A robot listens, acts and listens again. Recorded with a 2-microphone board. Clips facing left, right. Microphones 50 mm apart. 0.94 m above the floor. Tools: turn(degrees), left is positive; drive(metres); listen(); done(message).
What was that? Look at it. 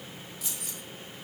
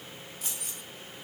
turn(degrees=-45)
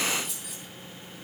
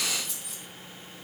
done("Facing the keys jangling.")